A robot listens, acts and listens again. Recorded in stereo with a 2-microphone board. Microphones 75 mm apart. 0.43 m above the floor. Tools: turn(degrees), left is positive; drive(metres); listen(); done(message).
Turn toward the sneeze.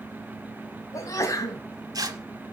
turn(degrees=45)
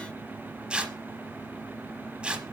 listen()
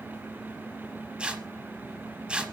done("I heard a sneeze, but can't make it out now. It was about straight ahead or 90° left.")